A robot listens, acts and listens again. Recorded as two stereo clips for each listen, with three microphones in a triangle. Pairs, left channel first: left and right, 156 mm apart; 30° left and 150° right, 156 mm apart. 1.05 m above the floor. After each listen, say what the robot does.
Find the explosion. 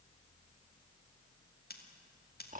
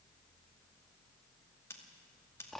Keep listening.
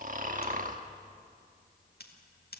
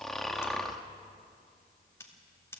Keep listening.
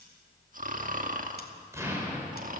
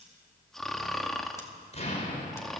Turn 15° right.
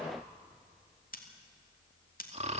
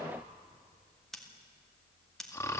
Facing where the explosion came from. I can't hear it now.